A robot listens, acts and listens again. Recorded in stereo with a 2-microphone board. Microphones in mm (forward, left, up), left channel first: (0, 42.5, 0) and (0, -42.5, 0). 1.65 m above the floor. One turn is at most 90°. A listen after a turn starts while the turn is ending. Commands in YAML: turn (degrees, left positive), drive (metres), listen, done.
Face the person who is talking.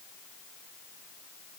listen: true
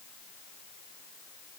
listen: true
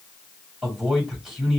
turn: -30
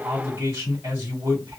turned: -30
turn: -90
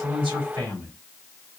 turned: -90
turn: -55
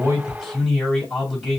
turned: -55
turn: 10
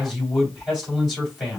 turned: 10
done: "Found it: a man speaking, straight ahead, 2 to 4 m away."